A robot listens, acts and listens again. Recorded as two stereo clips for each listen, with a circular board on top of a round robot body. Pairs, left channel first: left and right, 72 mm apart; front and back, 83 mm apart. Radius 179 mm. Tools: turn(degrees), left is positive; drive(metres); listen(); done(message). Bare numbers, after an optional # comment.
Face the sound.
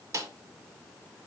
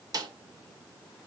# The snare drum: 140° right.
turn(-140)
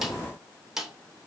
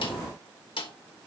done("Facing the snare drum.")